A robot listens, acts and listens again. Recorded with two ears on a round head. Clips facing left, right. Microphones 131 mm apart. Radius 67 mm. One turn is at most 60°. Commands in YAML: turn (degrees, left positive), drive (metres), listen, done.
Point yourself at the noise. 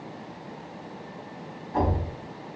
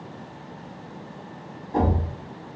turn: -45
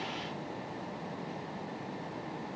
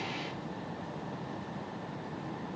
listen: true
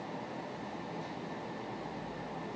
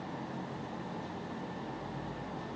done: "I heard a thud, but can't make it out now. It was about straight ahead or 90° right."